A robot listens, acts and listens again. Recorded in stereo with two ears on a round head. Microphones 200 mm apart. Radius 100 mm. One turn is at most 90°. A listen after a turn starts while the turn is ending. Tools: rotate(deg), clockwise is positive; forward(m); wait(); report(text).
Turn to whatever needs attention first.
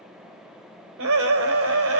rotate(65)
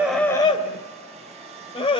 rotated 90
rotate(-25)
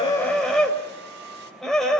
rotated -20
report("Facing the scream, over 4 m away.")